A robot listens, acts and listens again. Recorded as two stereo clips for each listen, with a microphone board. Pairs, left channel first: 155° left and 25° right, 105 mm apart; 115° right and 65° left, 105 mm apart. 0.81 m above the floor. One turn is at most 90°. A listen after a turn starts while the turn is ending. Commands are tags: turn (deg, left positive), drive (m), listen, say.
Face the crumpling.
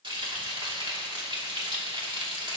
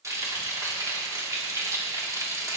<listen/>
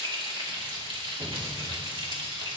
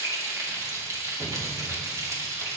<listen/>
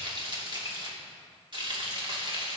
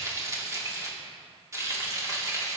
<say>I can't make out crumpling, only frying.</say>